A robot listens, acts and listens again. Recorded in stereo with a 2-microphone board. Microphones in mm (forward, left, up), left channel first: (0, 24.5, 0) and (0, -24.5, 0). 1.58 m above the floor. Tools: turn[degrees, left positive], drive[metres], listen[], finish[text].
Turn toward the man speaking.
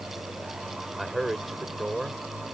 Action: turn[30]
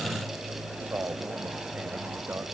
Thought: So it is at 30° right.
Action: turn[-30]
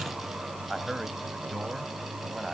Action: finish[Found it: a man speaking, straight ahead.]